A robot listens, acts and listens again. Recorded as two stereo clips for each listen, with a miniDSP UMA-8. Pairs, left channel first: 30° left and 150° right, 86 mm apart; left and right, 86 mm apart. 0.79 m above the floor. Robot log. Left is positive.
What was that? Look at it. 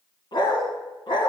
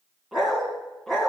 end: Facing the dog barking, 2 to 4 m away.